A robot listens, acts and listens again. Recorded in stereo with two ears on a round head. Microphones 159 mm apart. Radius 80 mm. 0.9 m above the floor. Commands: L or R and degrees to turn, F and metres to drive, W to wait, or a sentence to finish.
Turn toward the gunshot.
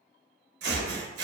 R60
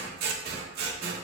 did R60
W
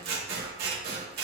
I heard a gunshot, but can't make it out now. It was about straight ahead or 60° right.